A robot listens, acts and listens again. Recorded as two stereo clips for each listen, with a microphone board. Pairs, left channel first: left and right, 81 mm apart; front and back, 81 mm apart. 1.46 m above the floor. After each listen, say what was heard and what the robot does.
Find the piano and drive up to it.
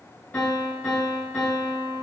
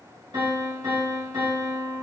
The piano: 155° left. Turn 155° left.
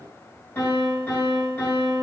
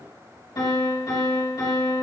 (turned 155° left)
The piano is now 25° left. Turn 25° left.
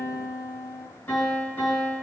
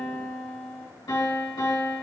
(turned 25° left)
The piano is now 25° left. Turn 25° left.
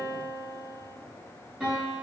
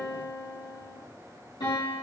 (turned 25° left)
The piano is now 15° right. Turn 15° right.
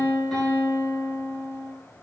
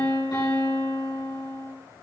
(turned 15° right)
Drive 1.0 m forward.
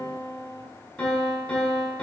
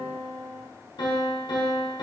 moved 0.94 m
The piano is now 10° left. Turn 10° left.
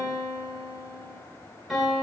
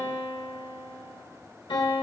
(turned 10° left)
Drive 1.0 m forward.
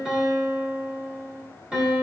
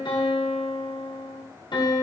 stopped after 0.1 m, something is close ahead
The piano is now 10° right. Turn 10° right.
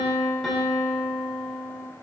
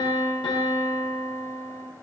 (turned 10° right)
I am next to the piano.